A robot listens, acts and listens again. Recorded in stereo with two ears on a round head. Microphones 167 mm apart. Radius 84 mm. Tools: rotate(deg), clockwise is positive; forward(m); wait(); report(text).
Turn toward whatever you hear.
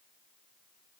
wait()
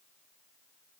wait()
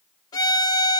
rotate(-20)
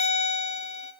rotate(-135)
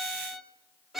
report("Found it: a violin, straight ahead.")